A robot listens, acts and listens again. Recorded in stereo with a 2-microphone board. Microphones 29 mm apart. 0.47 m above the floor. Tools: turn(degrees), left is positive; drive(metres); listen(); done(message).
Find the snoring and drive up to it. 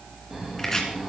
turn(degrees=-15)
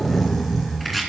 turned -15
drive(metres=1.0)
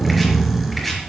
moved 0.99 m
drive(metres=1.0)
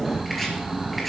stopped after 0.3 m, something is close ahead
turn(degrees=-10)
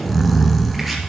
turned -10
done("I am next to the snoring.")